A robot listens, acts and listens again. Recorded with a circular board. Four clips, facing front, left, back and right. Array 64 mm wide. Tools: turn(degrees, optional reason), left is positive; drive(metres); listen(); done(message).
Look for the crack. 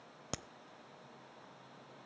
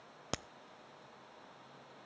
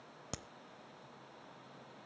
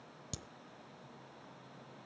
turn(degrees=75, reason="The crack: 75° left.")
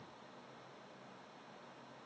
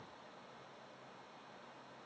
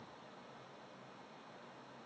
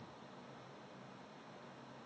done("Facing where the crack came from. I can't hear it now.")